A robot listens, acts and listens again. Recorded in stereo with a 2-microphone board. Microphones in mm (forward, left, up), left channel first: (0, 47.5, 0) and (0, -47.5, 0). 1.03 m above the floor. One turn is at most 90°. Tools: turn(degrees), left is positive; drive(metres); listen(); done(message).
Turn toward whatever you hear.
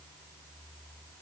listen()
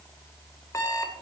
turn(degrees=35)
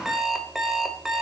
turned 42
done("Facing the alarm clock, 1 to 2 m away.")